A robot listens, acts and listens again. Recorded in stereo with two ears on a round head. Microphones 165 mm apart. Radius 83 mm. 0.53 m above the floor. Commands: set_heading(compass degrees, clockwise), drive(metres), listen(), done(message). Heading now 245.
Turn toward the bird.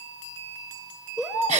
set_heading(275)
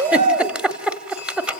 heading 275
set_heading(60)
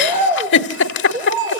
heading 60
set_heading(90)
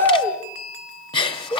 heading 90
set_heading(75)
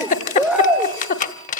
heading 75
done("Found it: a bird, straight ahead, 2 to 4 m away.")